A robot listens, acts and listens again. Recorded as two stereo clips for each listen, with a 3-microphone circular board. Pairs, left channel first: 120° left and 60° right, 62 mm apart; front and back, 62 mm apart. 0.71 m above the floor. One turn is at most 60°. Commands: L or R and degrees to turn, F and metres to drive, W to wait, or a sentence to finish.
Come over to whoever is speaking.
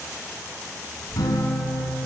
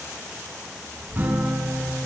R60
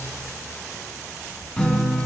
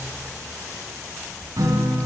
R60
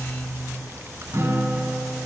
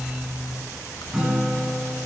R10
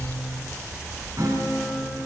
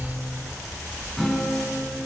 F1.0
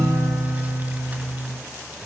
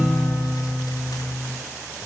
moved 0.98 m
W
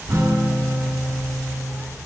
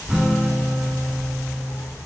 F1.0
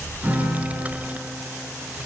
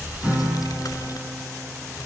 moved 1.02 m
F1.0
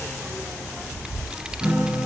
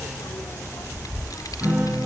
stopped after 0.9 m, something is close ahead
L15
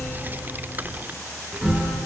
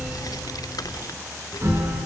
I am next to the child speaking.